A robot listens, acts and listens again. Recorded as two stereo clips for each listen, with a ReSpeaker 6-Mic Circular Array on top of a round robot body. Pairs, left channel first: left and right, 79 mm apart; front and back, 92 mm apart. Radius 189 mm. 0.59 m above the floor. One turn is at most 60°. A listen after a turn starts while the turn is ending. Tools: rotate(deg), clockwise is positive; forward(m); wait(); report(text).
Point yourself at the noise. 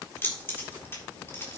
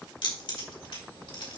rotate(-30)
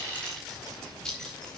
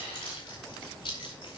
rotate(-10)
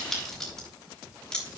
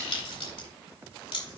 rotate(-10)
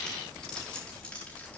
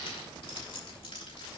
rotate(-10)
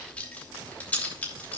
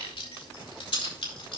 rotate(-20)
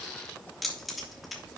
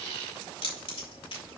report("Found it: keys jangling, straight ahead, 2 to 4 m away.")